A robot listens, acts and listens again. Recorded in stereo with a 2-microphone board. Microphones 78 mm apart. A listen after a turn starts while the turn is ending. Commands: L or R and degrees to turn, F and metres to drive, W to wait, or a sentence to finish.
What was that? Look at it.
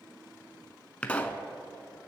L15
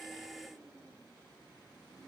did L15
W
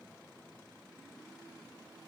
I heard a pop, but can't make it out now. It was about straight ahead or 150° left.